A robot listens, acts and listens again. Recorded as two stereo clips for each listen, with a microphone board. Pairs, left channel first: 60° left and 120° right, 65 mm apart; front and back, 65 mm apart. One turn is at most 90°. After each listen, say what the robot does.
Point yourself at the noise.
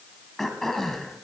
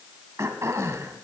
Turn 90° left.
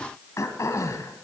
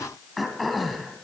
Turn 90° left.
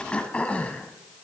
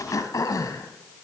Turn 10° right.
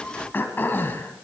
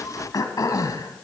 Facing the throat clearing, 1 to 2 m away.